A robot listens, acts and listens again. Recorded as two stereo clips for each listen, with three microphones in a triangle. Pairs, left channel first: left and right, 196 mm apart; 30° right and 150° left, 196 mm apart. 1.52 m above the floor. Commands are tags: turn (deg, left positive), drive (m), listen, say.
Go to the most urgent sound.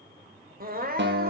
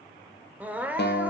<turn deg="-130"/>
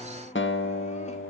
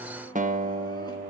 <listen/>
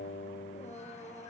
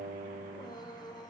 <turn deg="40"/>
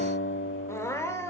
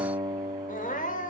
<turn deg="15"/>
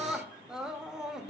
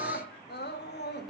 <drive m="1.0"/>
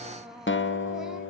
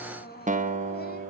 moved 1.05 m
<drive m="1.0"/>
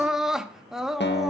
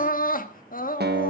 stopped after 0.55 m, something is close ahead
<say>I am next to the crying.</say>